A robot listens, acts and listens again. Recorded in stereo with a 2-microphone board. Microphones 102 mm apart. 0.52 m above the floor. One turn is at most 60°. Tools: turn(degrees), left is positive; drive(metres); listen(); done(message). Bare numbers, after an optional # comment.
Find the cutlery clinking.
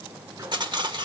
# The cutlery clinking: about 50° right or 130° right.
turn(-50)
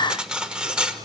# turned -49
# So it is at 10° right.
turn(-10)
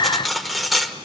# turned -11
done("Facing the cutlery clinking, under 1 m away.")